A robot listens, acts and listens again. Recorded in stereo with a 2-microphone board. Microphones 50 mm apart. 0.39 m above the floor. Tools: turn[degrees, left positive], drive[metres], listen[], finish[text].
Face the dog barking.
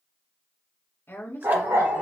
Action: turn[-90]
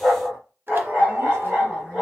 Action: finish[Facing the dog barking, 2 to 4 m away.]